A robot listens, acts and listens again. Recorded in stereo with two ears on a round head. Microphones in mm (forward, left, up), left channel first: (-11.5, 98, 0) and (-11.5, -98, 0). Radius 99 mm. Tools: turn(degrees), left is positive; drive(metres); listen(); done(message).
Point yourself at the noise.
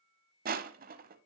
turn(degrees=-45)
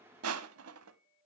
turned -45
turn(degrees=-90)
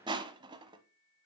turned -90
turn(degrees=-20)
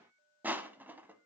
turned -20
turn(degrees=-10)
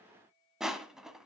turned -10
done("Found it: crushing, straight ahead, under 1 m away.")